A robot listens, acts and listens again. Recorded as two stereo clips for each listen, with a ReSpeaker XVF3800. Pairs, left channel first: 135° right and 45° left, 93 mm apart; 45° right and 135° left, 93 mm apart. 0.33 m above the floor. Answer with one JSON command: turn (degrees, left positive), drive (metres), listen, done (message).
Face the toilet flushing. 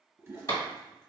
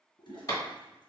{"turn": -20}
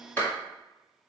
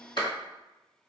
{"listen": true}
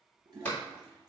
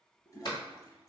{"done": "Facing the toilet flushing, 1 to 2 m away."}